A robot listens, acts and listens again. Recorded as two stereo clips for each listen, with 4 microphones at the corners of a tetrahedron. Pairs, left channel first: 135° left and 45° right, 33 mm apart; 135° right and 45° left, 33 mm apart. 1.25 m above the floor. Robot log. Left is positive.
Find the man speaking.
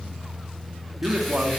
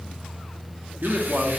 end: Facing the man speaking, 2 to 4 m away.